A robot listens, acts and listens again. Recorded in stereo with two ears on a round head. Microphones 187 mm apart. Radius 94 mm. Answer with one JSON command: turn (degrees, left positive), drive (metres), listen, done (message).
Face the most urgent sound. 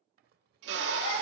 {"turn": 70}
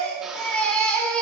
{"done": "Found it: a baby crying, straight ahead."}